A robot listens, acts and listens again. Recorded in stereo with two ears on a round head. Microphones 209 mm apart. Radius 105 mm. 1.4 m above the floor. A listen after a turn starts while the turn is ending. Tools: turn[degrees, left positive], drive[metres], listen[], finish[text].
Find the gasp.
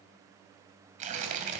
Action: listen[]
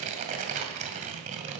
Action: listen[]
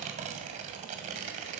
Action: finish[I can't make out a gasp, only tearing paper.]